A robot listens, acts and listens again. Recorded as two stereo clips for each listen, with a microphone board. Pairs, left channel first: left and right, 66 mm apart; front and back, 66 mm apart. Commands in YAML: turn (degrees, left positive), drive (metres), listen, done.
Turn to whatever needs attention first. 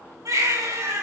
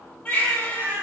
turn: -70
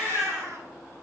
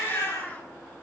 turn: -10
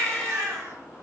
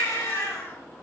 done: "Facing the baby crying."